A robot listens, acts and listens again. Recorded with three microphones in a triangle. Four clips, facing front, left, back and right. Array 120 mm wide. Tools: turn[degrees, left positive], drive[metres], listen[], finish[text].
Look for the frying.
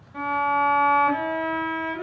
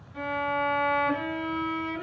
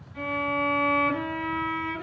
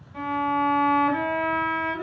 Action: listen[]
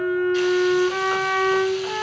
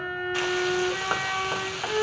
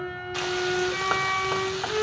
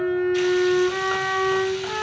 Thought: The frying: 145° left.
Action: turn[145]
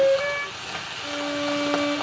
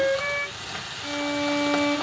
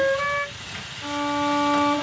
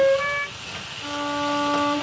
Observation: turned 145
Thought: The frying is now 15° left.
Action: turn[15]
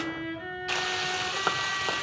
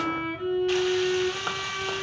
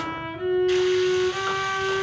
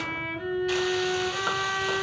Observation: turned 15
Action: finish[Facing the frying, 2 to 4 m away.]